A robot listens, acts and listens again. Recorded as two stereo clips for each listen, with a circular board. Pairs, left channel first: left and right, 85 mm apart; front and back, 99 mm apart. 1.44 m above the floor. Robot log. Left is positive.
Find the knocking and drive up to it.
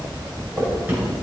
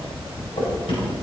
note: The knocking: 20° right.
cmd yaw -20
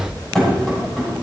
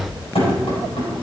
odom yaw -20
cmd fwd 1.0
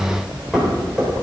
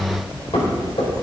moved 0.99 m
cmd fwd 1.0
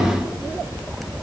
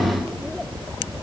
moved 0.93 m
cmd idle
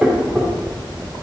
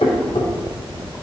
cmd fwd 1.0
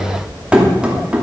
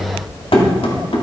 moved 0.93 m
note: The knocking is now 10° right.
cmd yaw -10
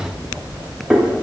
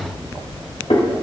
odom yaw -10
cmd fwd 1.0
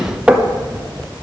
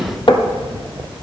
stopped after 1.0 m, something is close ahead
note: The knocking is now 10° right.
cmd yaw -10
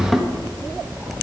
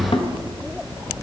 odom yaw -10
end: I am next to the knocking.